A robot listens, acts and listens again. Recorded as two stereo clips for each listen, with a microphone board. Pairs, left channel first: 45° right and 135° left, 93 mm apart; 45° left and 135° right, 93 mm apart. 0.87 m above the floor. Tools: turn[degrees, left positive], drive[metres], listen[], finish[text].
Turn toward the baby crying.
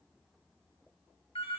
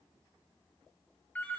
Action: listen[]
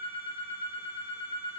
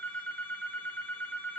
Action: listen[]
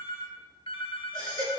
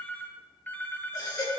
Thought: The baby crying: 90° left.
Action: turn[90]
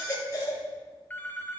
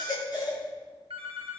Action: finish[Found it: a baby crying, straight ahead, 2 to 4 m away.]